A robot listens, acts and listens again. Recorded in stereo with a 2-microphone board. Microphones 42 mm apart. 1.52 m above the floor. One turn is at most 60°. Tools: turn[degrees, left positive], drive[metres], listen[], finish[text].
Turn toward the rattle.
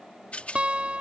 Thought: The rattle: about 30° left or 150° left.
Action: turn[30]
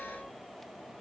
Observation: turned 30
Action: listen[]
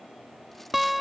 Action: listen[]
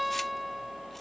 Action: finish[I heard a rattle, but can't make it out now. It was about straight ahead or 120° left.]